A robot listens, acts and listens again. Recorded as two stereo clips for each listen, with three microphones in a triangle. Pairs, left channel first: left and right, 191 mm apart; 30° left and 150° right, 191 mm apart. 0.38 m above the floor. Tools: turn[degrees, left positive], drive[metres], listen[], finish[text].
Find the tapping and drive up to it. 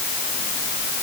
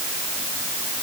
Action: listen[]
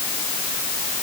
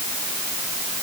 Action: listen[]
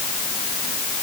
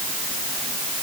Action: finish[I can't make out tapping.]